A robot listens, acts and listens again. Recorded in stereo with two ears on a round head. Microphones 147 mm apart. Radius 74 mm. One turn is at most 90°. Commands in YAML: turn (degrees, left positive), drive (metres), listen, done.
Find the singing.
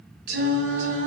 turn: -70
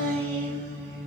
turn: 20
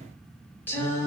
turn: 20
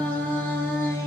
turn: 20
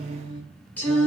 turn: 15
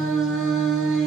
done: "Facing the singing, 1 to 2 m away."